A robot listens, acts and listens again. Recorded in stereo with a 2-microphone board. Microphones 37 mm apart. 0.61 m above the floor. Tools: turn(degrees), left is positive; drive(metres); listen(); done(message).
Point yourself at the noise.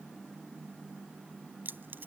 turn(degrees=-60)
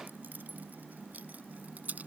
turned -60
turn(degrees=-45)
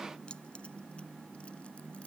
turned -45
listen()
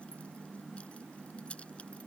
turn(degrees=35)
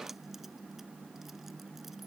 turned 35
listen()
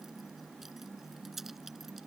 done("Facing the keys jangling.")